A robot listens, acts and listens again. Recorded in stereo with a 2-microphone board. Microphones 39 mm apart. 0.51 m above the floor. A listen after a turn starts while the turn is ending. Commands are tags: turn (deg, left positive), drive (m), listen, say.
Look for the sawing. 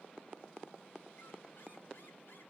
<listen/>
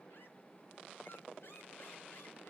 <listen/>
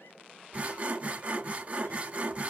<turn deg="-35"/>
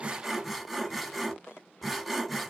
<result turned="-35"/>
<say>Found it: sawing, straight ahead, 1 to 2 m away.</say>